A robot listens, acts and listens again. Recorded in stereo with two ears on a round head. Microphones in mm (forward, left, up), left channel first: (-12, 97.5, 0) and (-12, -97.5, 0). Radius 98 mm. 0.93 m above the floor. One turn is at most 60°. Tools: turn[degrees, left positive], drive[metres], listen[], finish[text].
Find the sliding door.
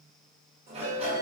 Thought: The sliding door: about 30° right or 150° right.
Action: turn[-30]
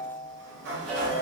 Thought: So it is at 120° right.
Action: turn[-60]
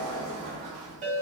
Thought: The sliding door is now 80° right.
Action: turn[-60]
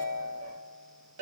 Thought: Nothing new. It was at 20° right.
Action: turn[-20]
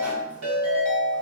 Action: listen[]
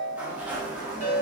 Action: finish[Found it: a sliding door, straight ahead, under 1 m away.]